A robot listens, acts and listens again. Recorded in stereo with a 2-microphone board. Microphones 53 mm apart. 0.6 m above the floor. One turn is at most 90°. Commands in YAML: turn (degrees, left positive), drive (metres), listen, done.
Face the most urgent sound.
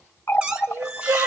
turn: -50
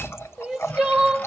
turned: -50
done: "Found it: crying, straight ahead."